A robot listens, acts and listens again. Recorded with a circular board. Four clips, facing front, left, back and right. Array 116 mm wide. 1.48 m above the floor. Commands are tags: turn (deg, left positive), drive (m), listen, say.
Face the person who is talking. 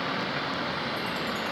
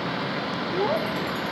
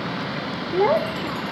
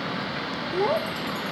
<turn deg="-170"/>
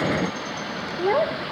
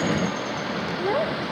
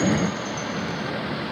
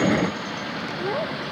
<turn deg="15"/>
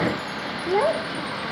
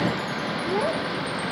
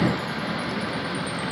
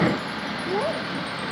<say>Facing the child speaking.</say>